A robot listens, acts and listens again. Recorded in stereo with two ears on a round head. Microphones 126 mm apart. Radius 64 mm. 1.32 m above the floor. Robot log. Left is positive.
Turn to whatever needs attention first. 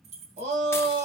note: The shout: about 45° right or 135° right.
cmd yaw -45
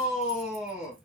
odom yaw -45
end: Facing the shout.